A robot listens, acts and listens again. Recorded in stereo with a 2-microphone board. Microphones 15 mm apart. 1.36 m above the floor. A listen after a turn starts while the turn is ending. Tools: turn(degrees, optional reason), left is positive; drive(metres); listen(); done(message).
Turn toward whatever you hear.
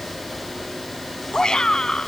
turn(degrees=55, reason="The shout: about 55° left or 125° left.")
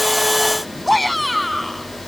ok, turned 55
done("Facing the shout.")